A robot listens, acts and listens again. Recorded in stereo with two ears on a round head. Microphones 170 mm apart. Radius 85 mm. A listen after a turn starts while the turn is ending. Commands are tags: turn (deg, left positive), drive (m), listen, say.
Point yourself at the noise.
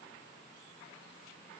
<listen/>
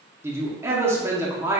<turn deg="-30"/>
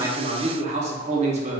<turn deg="-135"/>
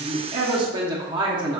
<turn deg="-30"/>
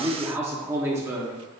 <turn deg="-20"/>
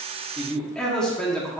<say>Found it: a man speaking, straight ahead.</say>